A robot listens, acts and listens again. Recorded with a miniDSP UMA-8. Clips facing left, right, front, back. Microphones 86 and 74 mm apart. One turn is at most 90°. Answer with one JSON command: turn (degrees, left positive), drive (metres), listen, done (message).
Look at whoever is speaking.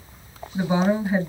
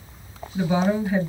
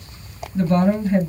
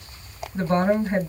{"turn": 90}
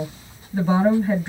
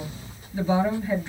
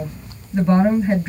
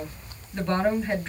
{"turn": 75}
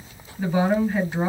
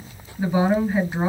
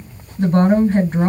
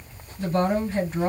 {"turn": -10}
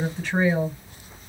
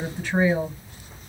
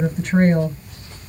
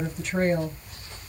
{"done": "Facing the woman speaking."}